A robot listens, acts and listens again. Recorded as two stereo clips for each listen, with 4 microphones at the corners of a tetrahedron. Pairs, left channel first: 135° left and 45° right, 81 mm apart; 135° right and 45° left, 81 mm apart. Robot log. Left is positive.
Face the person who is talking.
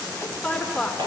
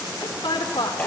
note: The woman speaking: 150° right.
cmd yaw -150
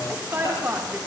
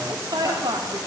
note: The woman speaking is now 20° left.
cmd yaw +20
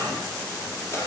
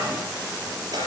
cmd idle
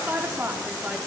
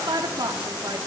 note: The woman speaking is now 20° left.
cmd yaw +20
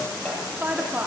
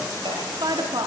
note: The woman speaking is now 25° left.
cmd yaw +25
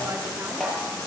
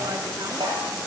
cmd idle
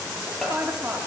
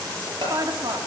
note: The woman speaking is now 20° left.
cmd yaw +20
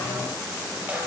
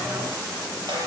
cmd idle
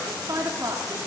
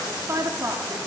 end: Facing the woman speaking, 2 to 4 m away.